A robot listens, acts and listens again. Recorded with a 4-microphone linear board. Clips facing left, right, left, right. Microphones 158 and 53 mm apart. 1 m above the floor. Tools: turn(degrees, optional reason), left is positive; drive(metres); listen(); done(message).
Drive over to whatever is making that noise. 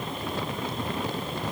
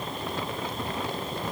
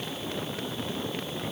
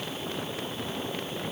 listen()
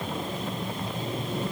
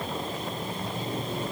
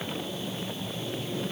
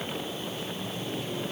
listen()
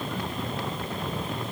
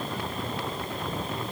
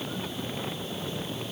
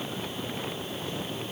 done("I can't make out anything.")